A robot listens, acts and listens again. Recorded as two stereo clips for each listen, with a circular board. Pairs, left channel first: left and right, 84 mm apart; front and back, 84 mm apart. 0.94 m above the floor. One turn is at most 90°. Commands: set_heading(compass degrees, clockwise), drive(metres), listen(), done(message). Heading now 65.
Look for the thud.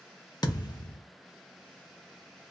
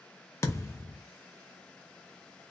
set_heading(10)
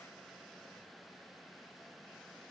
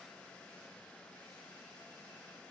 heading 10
done("Facing where the thud came from. I can't hear it now.")